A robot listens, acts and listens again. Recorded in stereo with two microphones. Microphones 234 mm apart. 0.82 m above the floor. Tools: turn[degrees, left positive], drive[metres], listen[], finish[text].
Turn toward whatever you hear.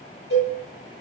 Thought: The cowbell: about 60° left or 120° left.
Action: turn[60]
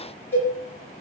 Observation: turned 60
Thought: So it is at 10° left.
Action: turn[10]
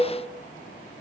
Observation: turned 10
Action: finish[Facing the cowbell, 1 to 2 m away.]